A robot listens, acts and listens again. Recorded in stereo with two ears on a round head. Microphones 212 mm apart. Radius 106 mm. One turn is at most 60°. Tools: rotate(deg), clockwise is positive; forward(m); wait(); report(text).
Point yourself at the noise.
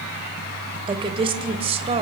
rotate(30)
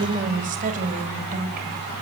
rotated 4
rotate(40)
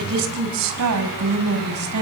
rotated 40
rotate(60)
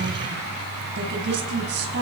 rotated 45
rotate(50)
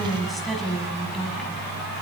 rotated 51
report("Facing the woman speaking.")